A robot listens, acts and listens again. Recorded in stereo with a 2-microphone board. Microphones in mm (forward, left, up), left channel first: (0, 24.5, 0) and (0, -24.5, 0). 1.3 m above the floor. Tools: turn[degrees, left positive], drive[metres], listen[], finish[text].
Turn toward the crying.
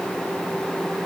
Action: listen[]
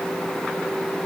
Action: listen[]
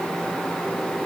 Action: finish[I can't make out crying.]